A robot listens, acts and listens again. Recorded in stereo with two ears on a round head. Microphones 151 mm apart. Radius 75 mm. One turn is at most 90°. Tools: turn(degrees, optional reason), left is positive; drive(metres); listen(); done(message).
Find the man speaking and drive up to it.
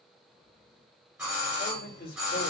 turn(degrees=65, reason="The man speaking: about 65° left or 115° left.")
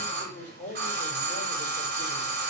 turn(degrees=50, reason="So it is at 50° left.")
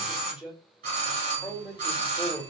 drive(metres=1.0)
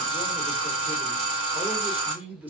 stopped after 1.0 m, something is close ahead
turn(degrees=-10, reason="The man speaking is now 10° right.")
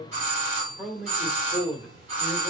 done("Arrived at the man speaking, straight ahead.")